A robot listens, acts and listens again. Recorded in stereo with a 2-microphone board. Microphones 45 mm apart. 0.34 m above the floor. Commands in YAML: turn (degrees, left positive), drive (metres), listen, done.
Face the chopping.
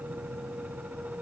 listen: true
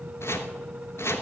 turn: 65
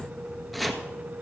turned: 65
done: "Found it: chopping, straight ahead."